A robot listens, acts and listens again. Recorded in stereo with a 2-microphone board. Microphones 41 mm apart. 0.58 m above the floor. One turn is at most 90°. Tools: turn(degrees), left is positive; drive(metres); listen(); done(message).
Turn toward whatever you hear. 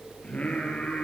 turn(degrees=25)
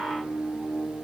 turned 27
turn(degrees=90)
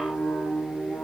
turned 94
turn(degrees=45)
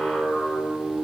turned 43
done("Facing the singing.")